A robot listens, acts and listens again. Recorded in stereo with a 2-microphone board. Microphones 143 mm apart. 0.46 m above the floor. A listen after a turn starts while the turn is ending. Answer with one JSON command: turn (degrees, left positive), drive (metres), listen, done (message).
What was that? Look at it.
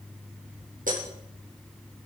{"turn": -90}
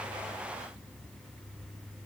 {"done": "Facing where the breaking glass came from. I can't hear it now."}